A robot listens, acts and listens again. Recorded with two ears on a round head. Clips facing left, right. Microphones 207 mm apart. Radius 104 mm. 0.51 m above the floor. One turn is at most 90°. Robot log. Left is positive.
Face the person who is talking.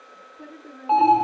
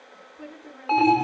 note: The woman speaking: about 35° right or 145° right.
cmd yaw -35
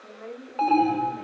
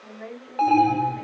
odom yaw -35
note: So it is at 110° right.
cmd yaw -90
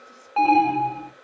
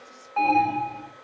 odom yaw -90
note: Nothing new. It was at 20° right.
cmd yaw -20
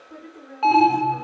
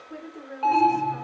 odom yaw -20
note: The woman speaking is now 35° right.
cmd yaw -35
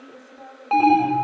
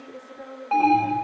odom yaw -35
end: Facing the woman speaking.